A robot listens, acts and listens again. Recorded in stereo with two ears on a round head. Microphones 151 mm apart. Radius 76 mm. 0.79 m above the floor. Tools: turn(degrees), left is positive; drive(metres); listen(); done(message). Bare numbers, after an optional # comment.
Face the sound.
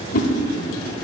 # The whoosh: about 50° left or 130° left.
turn(50)
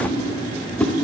done("Facing the whoosh.")